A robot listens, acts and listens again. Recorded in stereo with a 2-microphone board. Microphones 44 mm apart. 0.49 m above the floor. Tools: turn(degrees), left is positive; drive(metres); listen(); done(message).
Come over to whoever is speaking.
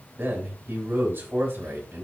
turn(degrees=-55)
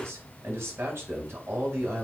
turn(degrees=-65)
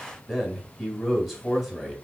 drive(metres=1.0)
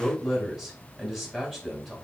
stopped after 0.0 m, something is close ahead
done("Something is in my way. I am facing the man speaking but have not reached it.")